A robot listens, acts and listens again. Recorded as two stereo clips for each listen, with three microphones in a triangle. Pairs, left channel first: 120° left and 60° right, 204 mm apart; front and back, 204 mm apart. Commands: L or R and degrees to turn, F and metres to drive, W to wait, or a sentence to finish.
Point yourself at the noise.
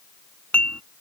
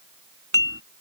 R155
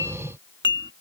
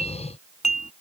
R55
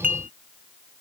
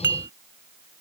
R15
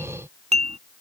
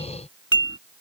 Found it: dishes clattering, straight ahead.